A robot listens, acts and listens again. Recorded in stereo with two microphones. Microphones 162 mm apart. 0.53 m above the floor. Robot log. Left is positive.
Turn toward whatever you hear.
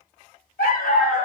cmd yaw +90
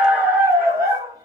note: So it is at 20° right.
cmd yaw -20
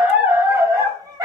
note: The dog barking is now 25° right.
cmd yaw -25
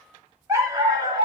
note: The dog barking is now 30° right.
cmd yaw -30
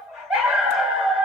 end: Facing the dog barking, 1 to 2 m away.